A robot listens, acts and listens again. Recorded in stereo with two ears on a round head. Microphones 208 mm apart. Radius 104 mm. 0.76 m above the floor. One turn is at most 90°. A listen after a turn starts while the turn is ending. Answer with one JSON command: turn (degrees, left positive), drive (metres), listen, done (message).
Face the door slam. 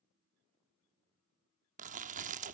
{"listen": true}
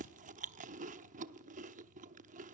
{"listen": true}
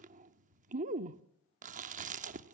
{"done": "I can't make out a door slam to turn to."}